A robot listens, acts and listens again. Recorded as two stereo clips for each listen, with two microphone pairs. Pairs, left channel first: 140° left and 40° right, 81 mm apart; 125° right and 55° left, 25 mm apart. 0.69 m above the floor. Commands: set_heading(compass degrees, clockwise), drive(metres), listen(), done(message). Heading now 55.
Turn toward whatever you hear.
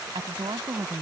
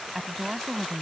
set_heading(80)
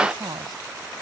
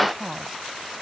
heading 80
set_heading(95)
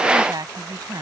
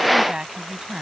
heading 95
set_heading(105)
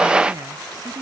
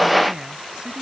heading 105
done("Found it: a woman speaking, straight ahead.")